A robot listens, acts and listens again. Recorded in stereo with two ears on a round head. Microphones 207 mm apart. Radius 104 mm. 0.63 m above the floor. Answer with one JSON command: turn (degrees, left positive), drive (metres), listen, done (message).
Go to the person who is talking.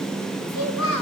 {"turn": 70}
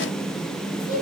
{"turn": 40}
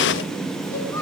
{"turn": 15}
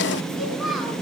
{"drive": 1.0}
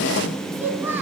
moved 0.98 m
{"turn": -10}
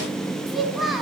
{"drive": 1.0}
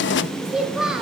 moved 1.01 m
{"drive": 1.0}
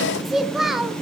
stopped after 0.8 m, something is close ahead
{"done": "I am next to the child speaking."}